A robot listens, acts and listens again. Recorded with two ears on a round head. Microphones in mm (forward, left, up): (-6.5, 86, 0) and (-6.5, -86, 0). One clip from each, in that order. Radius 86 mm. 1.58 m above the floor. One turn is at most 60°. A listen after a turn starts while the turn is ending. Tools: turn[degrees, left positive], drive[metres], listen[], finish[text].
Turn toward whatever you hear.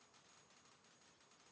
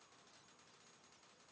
Action: listen[]
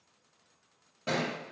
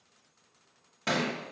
Thought: The thud: about 50° right or 130° right.
Action: turn[-50]
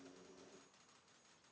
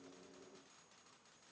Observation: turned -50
Action: listen[]
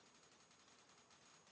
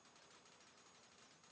Action: finish[I heard a thud, but can't make it out now. It was about straight ahead or 80° right.]